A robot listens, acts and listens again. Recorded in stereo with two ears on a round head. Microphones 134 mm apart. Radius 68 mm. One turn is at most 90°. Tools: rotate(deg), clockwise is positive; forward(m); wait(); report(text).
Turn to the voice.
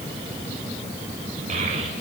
rotate(55)
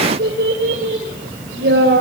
rotate(80)
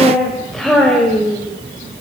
report("Found it: a child speaking, straight ahead.")